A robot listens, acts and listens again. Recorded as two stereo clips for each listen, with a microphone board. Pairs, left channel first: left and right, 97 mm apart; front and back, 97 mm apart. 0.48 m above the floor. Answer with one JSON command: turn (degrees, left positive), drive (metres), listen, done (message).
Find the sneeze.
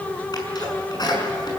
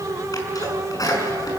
{"turn": 50}
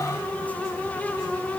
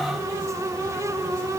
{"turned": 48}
{"done": "I heard a sneeze from this way, but can't make it out now."}